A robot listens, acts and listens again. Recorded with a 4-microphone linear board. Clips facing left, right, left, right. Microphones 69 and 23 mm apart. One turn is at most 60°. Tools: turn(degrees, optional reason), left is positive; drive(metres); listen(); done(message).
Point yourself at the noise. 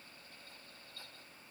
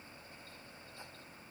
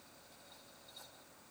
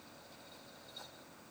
listen()
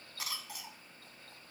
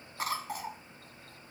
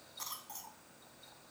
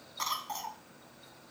turn(degrees=-40, reason="The cough: about 40° right or 140° right.")
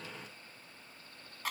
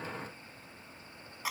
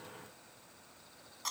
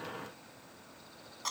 turn(degrees=-10, reason="So it is at 10° right.")
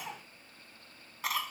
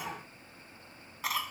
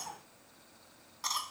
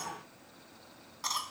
done("Found it: a cough, straight ahead.")